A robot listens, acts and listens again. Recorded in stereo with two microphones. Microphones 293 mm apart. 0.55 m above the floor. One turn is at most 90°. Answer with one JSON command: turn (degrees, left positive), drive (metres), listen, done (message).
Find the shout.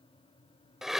{"listen": true}
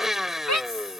{"turn": 70}
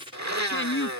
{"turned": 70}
{"turn": 40}
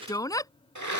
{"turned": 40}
{"turn": 10}
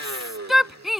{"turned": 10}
{"done": "Found it: a shout, straight ahead."}